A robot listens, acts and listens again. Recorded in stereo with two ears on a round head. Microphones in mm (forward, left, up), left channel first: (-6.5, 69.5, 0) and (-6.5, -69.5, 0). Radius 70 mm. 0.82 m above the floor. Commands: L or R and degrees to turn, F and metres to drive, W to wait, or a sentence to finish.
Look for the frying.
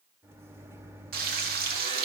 R65
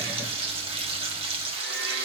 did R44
R40
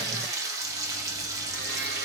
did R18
R25
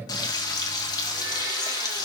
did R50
L30
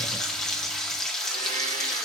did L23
Facing the frying, 1 to 2 m away.